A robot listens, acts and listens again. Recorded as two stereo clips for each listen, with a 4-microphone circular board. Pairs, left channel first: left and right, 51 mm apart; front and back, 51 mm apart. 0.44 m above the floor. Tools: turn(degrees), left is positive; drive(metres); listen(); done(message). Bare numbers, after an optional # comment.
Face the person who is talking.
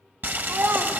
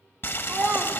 # The child speaking: 130° right.
turn(-130)
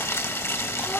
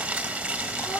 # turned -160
# Nothing new. It was at 30° left.
turn(30)
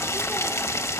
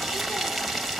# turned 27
listen()
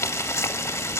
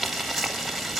done("I heard a child speaking from this way, but can't make it out now.")